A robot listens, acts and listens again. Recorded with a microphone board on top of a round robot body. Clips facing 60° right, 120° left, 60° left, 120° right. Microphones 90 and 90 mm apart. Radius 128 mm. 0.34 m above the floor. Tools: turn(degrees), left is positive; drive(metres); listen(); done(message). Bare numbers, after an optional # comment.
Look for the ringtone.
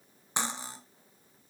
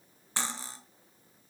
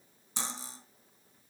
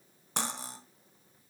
listen()
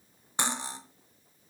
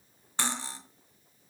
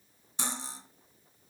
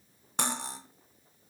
listen()
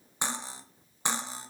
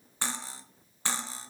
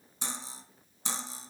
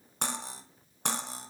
done("I can't make out a ringtone to turn to.")